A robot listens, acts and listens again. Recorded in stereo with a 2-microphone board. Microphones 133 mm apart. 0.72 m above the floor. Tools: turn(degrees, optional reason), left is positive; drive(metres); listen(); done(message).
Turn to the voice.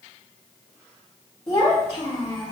turn(degrees=35, reason="The child speaking: about 35° left or 145° left.")
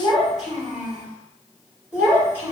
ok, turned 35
turn(degrees=-15, reason="So it is at 15° right.")
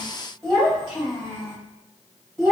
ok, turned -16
done("Found it: a child speaking, straight ahead, 2 to 4 m away.")